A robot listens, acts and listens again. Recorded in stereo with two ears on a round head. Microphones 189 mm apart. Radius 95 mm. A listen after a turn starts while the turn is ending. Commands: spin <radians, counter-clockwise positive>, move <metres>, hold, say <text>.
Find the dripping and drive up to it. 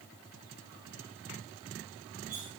hold
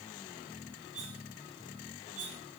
hold
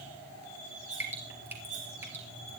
spin -0.52
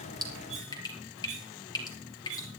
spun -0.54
spin 0.35
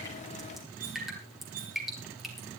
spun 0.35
move 1.0
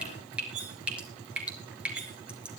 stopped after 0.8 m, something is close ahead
say Something is in my way. I am facing the dripping but have not reached it.